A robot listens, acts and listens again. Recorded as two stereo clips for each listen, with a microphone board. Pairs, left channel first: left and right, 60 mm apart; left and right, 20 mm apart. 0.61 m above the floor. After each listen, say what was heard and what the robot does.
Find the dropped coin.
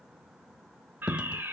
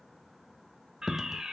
The dropped coin: about 15° right or 165° right. Turn 15° right.
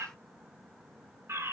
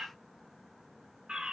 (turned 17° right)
Keep listening.
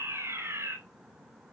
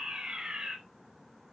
I heard a dropped coin, but can't make it out now. It was about straight ahead or 145° right.